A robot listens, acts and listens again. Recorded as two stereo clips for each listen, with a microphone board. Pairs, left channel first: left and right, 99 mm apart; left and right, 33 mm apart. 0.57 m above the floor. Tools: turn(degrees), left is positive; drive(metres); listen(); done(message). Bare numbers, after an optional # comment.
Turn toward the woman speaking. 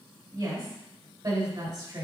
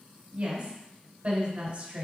# The woman speaking: about 50° right or 130° right.
turn(-50)
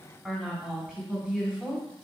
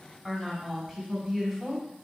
# So it is at 10° right.
turn(-10)
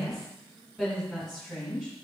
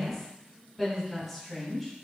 done("Facing the woman speaking, over 4 m away.")